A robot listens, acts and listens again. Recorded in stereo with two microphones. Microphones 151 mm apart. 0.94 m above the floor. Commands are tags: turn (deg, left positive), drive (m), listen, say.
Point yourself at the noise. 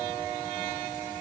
<listen/>
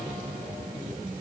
<listen/>
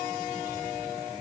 <say>I can't make out anything to turn to.</say>